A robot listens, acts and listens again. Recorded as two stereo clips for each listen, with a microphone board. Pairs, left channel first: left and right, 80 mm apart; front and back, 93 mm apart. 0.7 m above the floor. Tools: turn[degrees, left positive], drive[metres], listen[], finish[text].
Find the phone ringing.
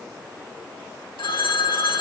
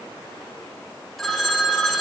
Thought: The phone ringing: 85° left.
Action: turn[85]
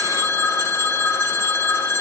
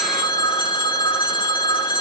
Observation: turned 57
Thought: The phone ringing is now 30° left.
Action: turn[30]
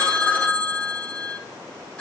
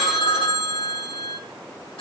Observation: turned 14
Thought: The phone ringing is now 15° left.
Action: turn[15]
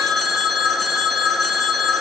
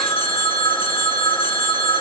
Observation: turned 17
Action: finish[Facing the phone ringing.]